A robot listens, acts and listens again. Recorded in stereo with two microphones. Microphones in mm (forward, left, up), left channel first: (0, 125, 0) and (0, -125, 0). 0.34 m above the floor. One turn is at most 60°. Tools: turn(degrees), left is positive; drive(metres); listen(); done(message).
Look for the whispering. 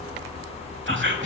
turn(degrees=-50)
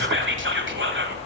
turn(degrees=-60)
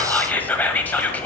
turn(degrees=10)
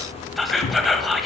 done("Found it: whispering, straight ahead.")